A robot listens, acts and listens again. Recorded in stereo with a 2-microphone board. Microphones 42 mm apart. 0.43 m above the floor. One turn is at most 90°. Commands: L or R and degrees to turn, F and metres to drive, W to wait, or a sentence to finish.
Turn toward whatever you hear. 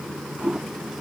R30
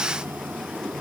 W
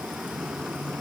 W
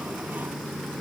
I heard a toilet flushing, but can't make it out now. It was about 15° left or 135° right.